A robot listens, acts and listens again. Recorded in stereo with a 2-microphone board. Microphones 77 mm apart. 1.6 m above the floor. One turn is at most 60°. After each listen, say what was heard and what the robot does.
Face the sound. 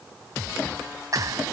The clap: about 50° right or 130° right. Turn 50° right.
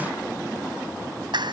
So it is at 80° right. Turn 60° right.
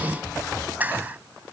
The clap is now 25° right. Turn 25° right.
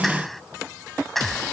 Found it: a clap, straight ahead.